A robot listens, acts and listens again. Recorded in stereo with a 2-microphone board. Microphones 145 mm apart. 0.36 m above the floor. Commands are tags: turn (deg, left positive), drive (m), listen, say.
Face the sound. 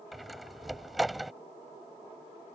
<turn deg="30"/>
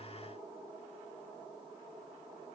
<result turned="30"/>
<listen/>
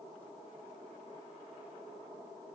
<say>I heard a door slam, but can't make it out now. It was about 30° right or 150° left.</say>